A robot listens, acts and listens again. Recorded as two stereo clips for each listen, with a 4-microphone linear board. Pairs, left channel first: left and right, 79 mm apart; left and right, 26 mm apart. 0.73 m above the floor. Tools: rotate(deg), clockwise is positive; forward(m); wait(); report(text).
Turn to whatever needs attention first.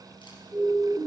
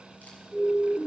rotate(35)
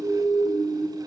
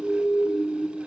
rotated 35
rotate(105)
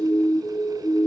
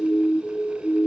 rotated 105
report("Facing the siren.")